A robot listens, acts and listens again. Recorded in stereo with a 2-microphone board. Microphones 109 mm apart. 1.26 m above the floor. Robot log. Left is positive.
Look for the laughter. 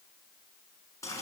cmd idle
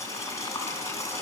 cmd idle
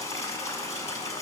end: I can't make out laughter, only boiling.